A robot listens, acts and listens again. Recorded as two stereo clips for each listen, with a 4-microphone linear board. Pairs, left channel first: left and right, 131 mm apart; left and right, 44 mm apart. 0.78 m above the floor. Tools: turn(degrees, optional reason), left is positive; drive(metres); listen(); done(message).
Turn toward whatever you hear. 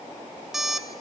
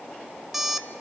turn(degrees=-30)
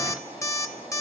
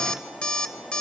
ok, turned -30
turn(degrees=25, reason="So it is at 25° left.")
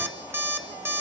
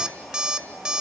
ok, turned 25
turn(degrees=-20, reason="The alarm clock is now 20° right.")
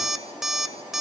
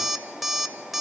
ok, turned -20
done("Facing the alarm clock, 1 to 2 m away.")